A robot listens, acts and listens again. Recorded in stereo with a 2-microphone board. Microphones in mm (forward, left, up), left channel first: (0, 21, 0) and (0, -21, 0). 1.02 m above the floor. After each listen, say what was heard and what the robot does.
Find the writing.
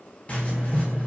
The writing: about 30° left or 150° left. Turn 30° left.
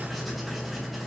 Facing the writing, 1 to 2 m away.